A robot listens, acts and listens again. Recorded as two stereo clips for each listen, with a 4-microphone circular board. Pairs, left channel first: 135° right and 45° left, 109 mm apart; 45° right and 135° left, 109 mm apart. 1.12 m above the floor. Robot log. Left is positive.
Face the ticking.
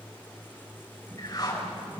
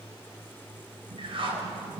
cmd idle
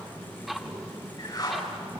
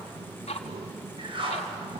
note: The ticking: 45° right.
cmd yaw -45
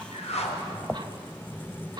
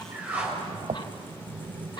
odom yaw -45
end: Found it: ticking, straight ahead, 1 to 2 m away.